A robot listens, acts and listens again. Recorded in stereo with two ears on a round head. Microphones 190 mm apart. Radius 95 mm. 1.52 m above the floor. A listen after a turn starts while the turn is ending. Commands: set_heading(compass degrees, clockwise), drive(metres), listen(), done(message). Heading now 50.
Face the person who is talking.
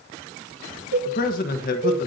set_heading(5)
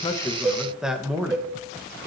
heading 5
done("Facing the man speaking.")